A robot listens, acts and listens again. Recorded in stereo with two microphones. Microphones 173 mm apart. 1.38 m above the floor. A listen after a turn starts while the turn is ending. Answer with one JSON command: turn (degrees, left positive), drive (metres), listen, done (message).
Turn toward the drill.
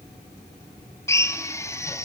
{"turn": 15}
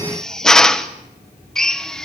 {"done": "Facing the drill, 1 to 2 m away."}